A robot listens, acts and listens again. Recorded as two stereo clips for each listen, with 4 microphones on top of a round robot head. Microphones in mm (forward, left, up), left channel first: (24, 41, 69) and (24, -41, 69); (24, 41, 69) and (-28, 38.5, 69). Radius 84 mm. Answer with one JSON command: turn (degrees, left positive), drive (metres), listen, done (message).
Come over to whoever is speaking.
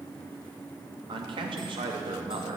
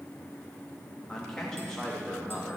{"turn": -80}
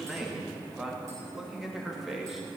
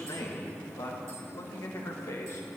{"drive": 1.0}
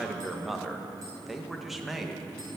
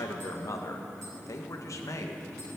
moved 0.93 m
{"drive": 1.0}
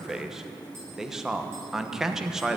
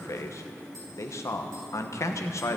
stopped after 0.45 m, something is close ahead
{"done": "I am next to the man speaking."}